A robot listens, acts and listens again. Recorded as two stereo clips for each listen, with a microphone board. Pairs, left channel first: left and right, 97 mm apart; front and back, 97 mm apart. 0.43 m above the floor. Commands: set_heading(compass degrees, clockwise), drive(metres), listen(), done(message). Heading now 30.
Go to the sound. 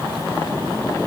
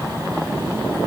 listen()
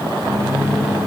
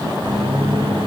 set_heading(215)
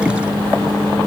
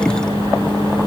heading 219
drive(1.0)
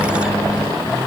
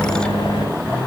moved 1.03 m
drive(1.0)
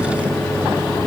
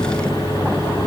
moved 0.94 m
drive(1.0)
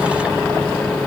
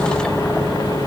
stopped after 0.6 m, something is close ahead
set_heading(204)
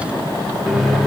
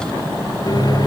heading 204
done("I am next to the microwave.")